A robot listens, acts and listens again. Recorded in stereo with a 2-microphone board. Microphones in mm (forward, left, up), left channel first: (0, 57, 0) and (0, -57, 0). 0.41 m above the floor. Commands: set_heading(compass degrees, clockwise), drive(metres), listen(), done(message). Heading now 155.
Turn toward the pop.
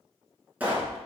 set_heading(185)
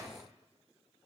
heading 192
listen()
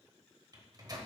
done("I heard a pop, but can't make it out now. It was about 25° left or 130° right.")